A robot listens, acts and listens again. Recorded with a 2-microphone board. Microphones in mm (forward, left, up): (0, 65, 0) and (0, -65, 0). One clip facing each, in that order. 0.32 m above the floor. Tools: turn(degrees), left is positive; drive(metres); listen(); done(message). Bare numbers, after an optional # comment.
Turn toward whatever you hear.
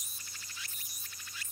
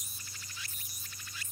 listen()
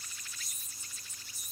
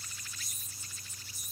listen()
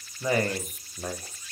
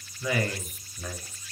# The man speaking: about 35° left or 145° left.
turn(35)
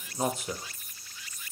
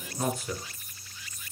# So it is at 20° left.
turn(20)
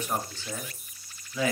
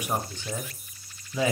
# The man speaking is now 25° right.
turn(-25)
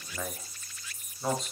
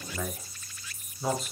done("Facing the man speaking.")